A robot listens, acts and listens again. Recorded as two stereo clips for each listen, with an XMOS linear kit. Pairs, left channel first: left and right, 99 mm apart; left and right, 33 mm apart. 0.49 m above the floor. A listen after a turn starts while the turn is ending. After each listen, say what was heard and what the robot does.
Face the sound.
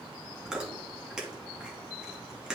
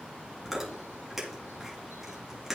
Turn 30° right.
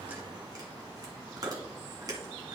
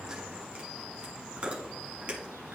So it is at 140° right. Turn 140° right.
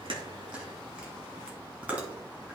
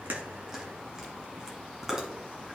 The chewing is now 15° right. Turn 15° right.
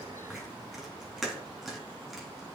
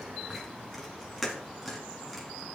Facing the chewing.